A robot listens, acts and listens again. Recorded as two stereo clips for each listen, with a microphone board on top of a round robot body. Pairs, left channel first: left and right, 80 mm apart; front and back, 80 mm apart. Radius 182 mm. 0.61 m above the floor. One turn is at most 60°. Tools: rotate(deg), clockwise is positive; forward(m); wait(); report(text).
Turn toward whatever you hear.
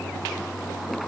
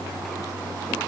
wait()
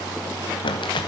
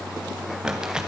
rotate(-60)
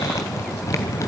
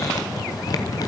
rotate(-40)
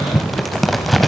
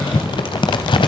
report("Facing the crumpling.")